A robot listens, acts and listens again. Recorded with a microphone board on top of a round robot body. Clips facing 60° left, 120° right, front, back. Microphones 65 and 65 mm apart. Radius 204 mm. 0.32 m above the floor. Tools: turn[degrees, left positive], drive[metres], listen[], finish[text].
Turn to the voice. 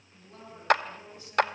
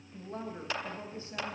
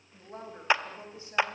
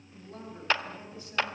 Thought: The woman speaking: 65° right.
Action: turn[-65]
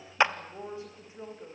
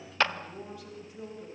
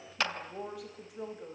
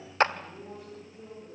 Action: finish[Found it: a woman speaking, straight ahead, over 4 m away.]